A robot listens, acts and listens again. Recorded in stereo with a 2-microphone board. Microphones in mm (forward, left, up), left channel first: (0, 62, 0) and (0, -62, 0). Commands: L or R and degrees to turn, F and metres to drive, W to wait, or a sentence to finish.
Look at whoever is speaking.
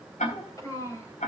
L25
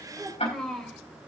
Facing the child speaking.